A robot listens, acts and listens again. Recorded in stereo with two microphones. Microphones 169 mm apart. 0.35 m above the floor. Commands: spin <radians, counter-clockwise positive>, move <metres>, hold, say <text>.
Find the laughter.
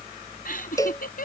spin 1.13
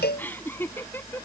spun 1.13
spin 0.17
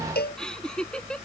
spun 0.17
say Found it: laughter, straight ahead.